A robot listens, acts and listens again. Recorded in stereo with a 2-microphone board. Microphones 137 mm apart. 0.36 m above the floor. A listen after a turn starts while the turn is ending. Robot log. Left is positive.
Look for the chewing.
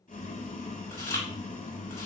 note: The chewing: about 20° left or 160° left.
cmd yaw +20
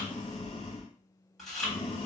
end: Found it: chewing, straight ahead.